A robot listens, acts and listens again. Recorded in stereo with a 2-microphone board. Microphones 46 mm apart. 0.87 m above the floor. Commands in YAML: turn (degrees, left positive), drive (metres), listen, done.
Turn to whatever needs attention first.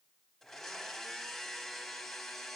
listen: true
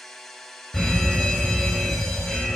turn: 30
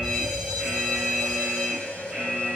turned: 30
turn: -15
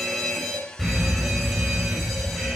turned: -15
done: "Facing the fire alarm, over 4 m away."